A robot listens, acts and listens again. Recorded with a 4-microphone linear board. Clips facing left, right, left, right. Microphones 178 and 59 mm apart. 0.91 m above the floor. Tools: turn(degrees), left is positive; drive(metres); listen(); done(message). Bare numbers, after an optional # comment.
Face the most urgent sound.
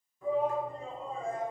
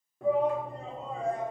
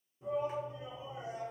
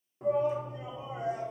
# The shout: about 70° right or 110° right.
turn(-70)
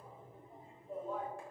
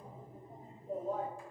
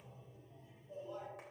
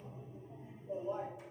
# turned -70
# So it is at 40° right.
turn(-40)
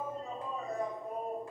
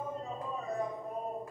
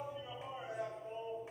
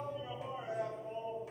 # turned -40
done("Found it: a shout, straight ahead.")